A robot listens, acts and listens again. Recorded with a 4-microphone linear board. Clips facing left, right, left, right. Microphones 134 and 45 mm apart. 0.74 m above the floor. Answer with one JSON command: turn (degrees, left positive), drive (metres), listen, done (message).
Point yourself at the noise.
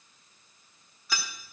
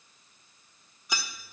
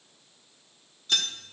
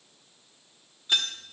{"turn": -20}
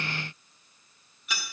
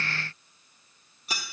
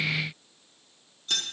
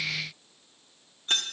{"turn": -140}
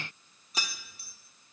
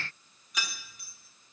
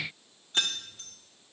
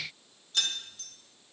{"turn": 35}
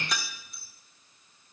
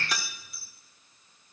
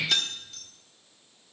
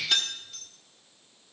{"done": "Facing the keys jangling."}